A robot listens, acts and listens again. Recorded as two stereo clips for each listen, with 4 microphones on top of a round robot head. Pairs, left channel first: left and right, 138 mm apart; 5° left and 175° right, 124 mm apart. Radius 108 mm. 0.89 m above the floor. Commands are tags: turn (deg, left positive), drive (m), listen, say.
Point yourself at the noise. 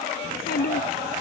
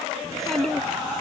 <turn deg="90"/>
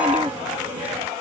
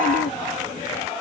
<listen/>
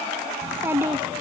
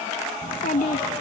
<turn deg="-20"/>
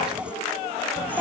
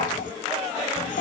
<turn deg="-15"/>
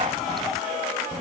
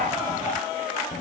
<say>Facing the child speaking.</say>